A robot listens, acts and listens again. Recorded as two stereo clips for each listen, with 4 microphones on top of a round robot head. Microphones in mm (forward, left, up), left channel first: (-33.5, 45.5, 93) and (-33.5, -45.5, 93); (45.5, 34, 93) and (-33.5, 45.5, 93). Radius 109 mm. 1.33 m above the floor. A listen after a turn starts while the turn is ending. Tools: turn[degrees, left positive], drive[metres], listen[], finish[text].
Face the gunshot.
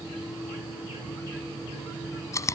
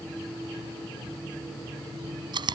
Action: listen[]
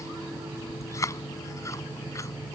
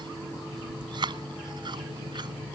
Action: listen[]
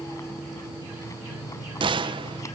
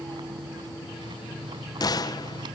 Thought: The gunshot: 50° right.
Action: turn[-50]
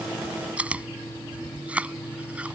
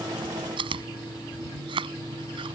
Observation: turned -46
Action: finish[Facing where the gunshot came from. I can't hear it now.]